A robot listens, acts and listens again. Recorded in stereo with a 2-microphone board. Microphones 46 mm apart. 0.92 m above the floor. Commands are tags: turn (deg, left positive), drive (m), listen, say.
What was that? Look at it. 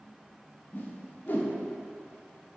<turn deg="45"/>
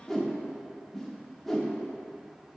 <say>Facing the whoosh, under 1 m away.</say>